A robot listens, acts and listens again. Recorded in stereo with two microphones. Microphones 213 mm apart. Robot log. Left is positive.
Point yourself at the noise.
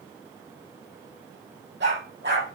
note: The dog barking: about 60° right or 120° right.
cmd yaw -60
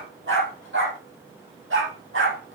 note: So it is at 75° right.
cmd yaw -75
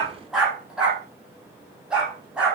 end: Found it: a dog barking, straight ahead.